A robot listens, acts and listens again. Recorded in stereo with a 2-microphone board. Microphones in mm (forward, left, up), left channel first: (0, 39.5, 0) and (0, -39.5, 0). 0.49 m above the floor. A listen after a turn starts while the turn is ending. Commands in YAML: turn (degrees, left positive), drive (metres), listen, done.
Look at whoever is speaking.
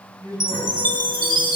turn: -50
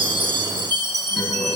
listen: true
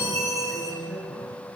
done: "Facing the man speaking."